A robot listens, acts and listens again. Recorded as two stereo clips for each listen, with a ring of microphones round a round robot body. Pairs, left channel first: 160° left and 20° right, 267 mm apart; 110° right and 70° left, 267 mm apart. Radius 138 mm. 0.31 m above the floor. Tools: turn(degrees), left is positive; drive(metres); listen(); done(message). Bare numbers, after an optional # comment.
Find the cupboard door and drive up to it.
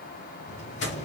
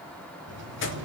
# The cupboard door: 100° left.
turn(100)
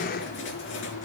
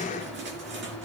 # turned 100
listen()
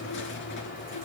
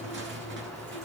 listen()
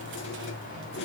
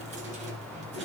# The cupboard door is now 10° left.
turn(10)
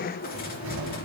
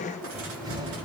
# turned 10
drive(1.0)
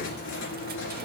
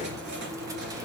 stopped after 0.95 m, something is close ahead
listen()
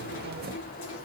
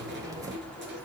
done("I am next to the cupboard door.")